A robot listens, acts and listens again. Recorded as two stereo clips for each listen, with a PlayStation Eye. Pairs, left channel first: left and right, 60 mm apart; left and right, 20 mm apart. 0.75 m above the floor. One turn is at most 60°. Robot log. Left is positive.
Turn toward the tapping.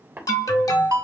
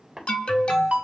note: The tapping: about 30° right or 150° right.
cmd yaw -30
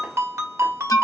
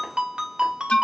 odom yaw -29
cmd idle
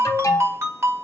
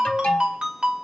cmd idle
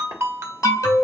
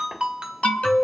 end: I heard tapping, but can't make it out now. It was about straight ahead or 125° right.